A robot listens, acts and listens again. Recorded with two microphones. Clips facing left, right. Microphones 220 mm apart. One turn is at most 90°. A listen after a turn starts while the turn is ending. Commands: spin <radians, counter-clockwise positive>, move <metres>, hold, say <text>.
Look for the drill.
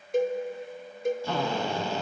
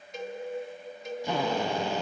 spin -0.26
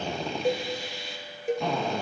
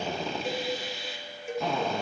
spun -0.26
say Found it: a drill, straight ahead, 1 to 2 m away.